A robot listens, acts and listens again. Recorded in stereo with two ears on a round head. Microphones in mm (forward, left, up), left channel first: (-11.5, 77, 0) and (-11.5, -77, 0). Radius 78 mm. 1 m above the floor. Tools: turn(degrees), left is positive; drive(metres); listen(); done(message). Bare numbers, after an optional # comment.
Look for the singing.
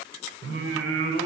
# The singing: about 60° right or 120° right.
turn(-60)
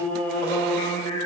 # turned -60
# So it is at 20° left.
turn(20)
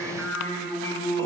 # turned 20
# The singing is now 15° left.
turn(15)
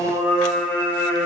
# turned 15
# The singing is now 10° left.
turn(10)
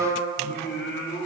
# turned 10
# The singing is now 10° left.
turn(10)
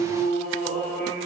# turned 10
done("Found it: singing, straight ahead, 2 to 4 m away.")